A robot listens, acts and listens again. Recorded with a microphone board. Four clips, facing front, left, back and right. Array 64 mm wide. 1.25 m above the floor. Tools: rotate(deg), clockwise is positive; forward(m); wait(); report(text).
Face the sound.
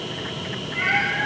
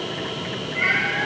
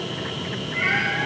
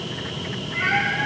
rotate(20)
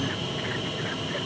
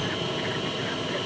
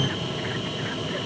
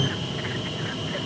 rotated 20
wait()
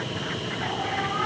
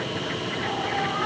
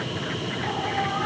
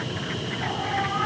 wait()
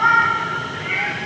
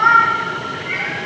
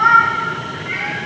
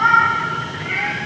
rotate(10)
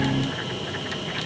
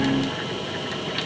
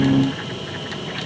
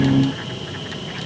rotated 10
wait()
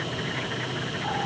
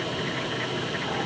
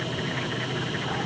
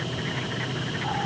wait()
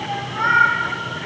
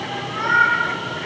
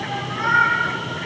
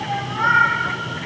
rotate(10)
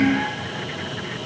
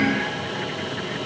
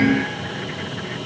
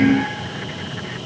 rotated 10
wait()
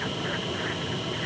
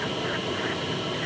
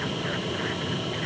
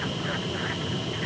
wait()
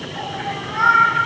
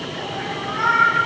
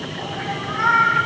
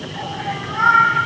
report("Facing the cat meowing.")